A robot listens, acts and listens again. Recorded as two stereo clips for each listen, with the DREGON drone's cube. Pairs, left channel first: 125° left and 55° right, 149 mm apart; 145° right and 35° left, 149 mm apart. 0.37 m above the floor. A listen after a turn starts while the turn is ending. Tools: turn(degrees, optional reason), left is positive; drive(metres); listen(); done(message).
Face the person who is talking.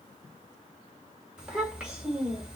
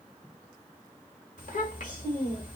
turn(degrees=-140, reason="The child speaking: 140° right.")
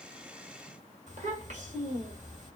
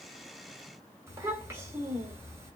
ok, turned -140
turn(degrees=-35, reason="The child speaking is now 35° right.")
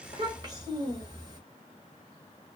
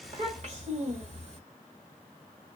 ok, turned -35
done("Found it: a child speaking, straight ahead.")